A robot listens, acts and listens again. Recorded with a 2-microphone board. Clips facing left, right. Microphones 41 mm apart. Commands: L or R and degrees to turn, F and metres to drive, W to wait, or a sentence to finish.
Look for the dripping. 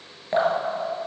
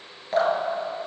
L30
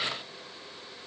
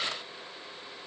W
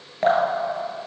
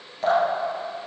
L135
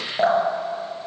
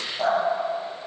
L50
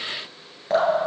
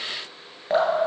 R10
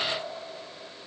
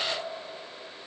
W
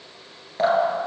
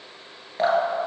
Found it: dripping, straight ahead, 1 to 2 m away.